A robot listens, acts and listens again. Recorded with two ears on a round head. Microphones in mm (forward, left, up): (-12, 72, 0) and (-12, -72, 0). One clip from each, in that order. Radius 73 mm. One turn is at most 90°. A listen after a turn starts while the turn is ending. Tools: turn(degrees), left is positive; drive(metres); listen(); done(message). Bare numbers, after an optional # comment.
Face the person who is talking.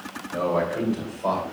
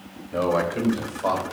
# The man speaking: about 60° right or 120° right.
turn(-60)
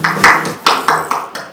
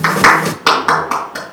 listen()
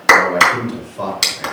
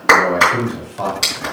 # So it is at 10° left.
turn(10)
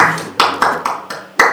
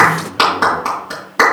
listen()
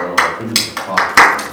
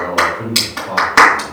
# The man speaking is now 20° left.
turn(20)
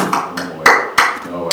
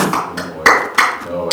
done("Facing the man speaking.")